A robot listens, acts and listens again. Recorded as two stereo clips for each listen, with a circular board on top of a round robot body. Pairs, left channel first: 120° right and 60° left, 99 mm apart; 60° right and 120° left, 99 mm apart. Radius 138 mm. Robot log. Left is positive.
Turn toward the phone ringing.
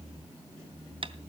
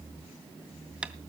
cmd idle
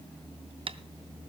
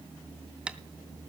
cmd idle
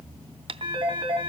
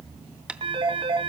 note: The phone ringing: 95° left.
cmd yaw +95
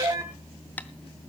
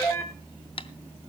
end: Facing the phone ringing.